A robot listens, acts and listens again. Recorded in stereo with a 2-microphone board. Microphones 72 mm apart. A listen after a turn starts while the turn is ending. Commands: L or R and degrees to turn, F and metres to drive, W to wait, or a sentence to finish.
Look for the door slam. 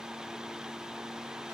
W
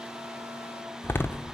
L30
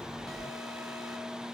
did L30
W
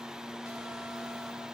I heard a door slam, but can't make it out now. It was about straight ahead or 120° left.